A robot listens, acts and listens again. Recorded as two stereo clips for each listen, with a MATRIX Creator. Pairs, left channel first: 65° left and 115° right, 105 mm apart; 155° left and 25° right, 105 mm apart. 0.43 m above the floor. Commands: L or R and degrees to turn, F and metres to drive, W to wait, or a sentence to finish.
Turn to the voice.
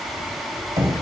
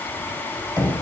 W
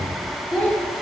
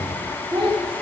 Facing the child speaking, 2 to 4 m away.